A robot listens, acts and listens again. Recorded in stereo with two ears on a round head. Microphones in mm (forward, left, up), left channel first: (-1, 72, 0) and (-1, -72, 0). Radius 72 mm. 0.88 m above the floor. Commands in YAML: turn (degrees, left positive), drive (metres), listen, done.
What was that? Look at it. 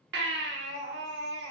turn: -70
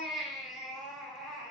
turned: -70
done: "Found it: a baby crying, straight ahead, 1 to 2 m away."